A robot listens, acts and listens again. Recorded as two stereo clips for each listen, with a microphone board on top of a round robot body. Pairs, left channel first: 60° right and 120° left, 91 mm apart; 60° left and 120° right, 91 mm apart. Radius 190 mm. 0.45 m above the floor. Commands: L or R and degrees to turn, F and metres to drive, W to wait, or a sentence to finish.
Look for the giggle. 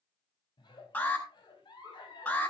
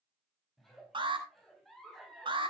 R30
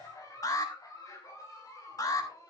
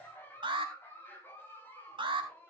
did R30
Found it: a giggle, straight ahead.